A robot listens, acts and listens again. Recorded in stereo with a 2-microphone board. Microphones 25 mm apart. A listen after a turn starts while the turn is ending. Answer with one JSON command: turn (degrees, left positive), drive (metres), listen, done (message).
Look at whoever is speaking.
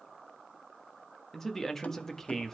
{"turn": 15}
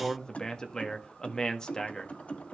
{"turn": 150}
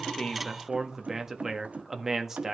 {"turn": -20}
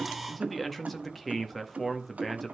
{"done": "Facing the man speaking, 1 to 2 m away."}